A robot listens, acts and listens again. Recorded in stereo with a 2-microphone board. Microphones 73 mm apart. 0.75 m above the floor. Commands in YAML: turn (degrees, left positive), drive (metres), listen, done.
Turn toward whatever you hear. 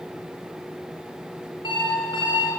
turn: 90
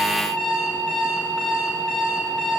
done: "Facing the alarm clock, over 4 m away."